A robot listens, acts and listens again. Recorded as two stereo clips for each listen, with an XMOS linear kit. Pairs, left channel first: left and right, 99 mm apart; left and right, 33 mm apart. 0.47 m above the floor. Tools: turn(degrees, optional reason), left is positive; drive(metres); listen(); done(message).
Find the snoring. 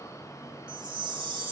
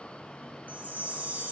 listen()
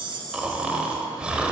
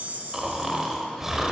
turn(degrees=-30)
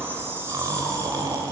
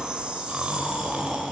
turn(degrees=-135, reason="So it is at 135° right.")
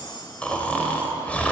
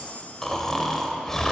turn(degrees=15, reason="The snoring is now 15° left.")
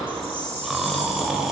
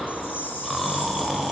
done("Found it: snoring, straight ahead, 1 to 2 m away.")